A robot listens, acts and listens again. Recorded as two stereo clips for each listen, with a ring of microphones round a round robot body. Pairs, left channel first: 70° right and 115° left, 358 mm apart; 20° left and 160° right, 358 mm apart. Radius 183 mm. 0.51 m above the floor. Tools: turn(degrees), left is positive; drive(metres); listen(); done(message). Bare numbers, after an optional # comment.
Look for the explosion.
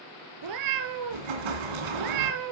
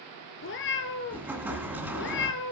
# The explosion: 120° left.
turn(120)
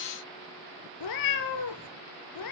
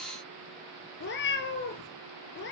done("Facing where the explosion came from. I can't hear it now.")